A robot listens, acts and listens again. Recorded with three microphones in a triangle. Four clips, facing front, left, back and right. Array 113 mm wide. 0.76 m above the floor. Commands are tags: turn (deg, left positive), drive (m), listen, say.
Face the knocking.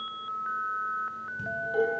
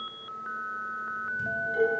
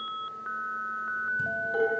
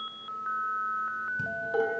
<listen/>
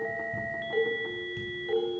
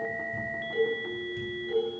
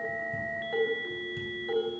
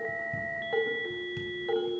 <listen/>
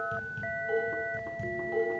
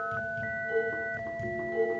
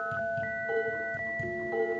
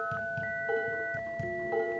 <say>I can't make out knocking to turn to.</say>